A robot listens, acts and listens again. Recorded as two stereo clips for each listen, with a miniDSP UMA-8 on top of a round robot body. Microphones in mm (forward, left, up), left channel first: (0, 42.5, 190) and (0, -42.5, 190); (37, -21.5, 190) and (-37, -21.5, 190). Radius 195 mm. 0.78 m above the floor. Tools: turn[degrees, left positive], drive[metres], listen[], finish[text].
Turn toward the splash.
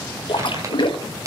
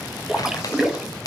Thought: The splash: 100° left.
Action: turn[100]
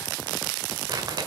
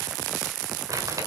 Action: finish[Facing where the splash came from. I can't hear it now.]